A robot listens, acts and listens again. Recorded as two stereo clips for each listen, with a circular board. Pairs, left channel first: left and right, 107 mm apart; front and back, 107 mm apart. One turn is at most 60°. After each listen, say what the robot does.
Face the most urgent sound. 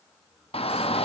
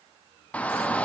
Turn 60° left.
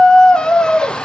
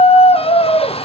Turn 10° left.
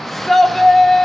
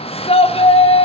Facing the shout.